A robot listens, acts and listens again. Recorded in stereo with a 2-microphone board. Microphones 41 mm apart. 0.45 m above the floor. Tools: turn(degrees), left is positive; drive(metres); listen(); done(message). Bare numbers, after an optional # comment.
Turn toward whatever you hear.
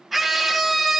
turn(-30)
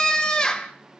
# So it is at 25° left.
turn(25)
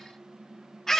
# The scream is now 15° left.
turn(15)
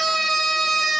done("Facing the scream, 1 to 2 m away.")